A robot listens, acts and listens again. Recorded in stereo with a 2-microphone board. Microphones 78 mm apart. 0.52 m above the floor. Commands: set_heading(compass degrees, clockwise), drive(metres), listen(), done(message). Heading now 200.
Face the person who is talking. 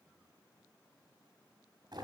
listen()
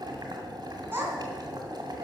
set_heading(230)
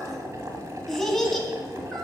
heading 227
done("Facing the child speaking, 2 to 4 m away.")